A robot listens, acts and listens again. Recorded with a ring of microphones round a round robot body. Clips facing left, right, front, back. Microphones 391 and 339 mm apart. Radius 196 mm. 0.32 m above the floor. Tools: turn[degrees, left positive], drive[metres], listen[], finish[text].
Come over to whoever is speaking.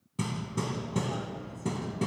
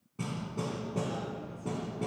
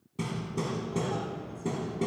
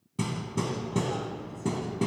Action: listen[]
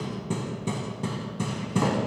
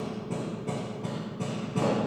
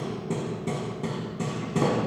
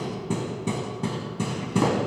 Action: listen[]
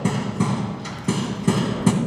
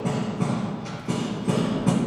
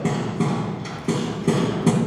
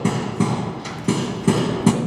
Action: finish[I can't make out anyone speaking, only hammering.]